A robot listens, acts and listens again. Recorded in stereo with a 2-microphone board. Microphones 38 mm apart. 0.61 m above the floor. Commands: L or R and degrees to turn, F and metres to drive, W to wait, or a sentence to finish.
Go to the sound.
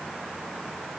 W
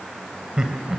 R15
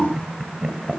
F1.0
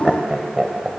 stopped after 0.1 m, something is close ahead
Blocked. The laughter is further on, straight ahead.